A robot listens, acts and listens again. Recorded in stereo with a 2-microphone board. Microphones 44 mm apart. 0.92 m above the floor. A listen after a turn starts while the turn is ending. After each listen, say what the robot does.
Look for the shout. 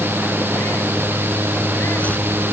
Keep listening.
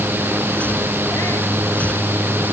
Keep listening.
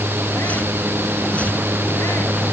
I can't make out a shout.